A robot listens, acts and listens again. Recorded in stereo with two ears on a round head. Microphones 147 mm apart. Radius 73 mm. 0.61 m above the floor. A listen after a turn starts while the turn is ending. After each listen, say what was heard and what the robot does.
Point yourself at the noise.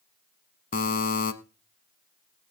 The buzzer: about 50° left or 130° left. Turn 50° left.
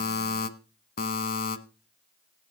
So it is at 70° left. Turn 70° left.
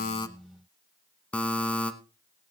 The buzzer is now 10° left. Turn 10° left.
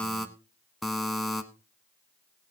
Facing the buzzer.